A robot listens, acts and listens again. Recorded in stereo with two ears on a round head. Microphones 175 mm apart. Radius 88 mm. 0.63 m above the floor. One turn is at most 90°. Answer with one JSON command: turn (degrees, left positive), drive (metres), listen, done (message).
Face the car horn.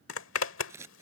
{"listen": true}
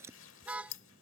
{"turn": -30}
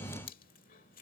{"listen": true}
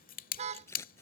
{"turn": -90}
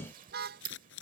{"turn": -50}
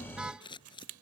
{"done": "Facing the car horn."}